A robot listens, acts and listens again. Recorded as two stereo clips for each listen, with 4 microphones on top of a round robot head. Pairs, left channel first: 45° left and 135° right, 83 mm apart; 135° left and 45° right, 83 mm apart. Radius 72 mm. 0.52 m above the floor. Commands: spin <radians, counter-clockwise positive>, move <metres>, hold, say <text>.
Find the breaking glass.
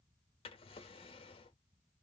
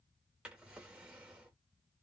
hold
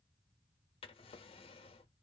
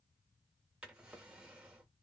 hold
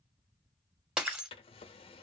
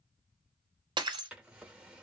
spin -1.05
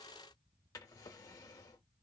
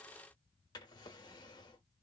say Facing where the breaking glass came from. I can't hear it now.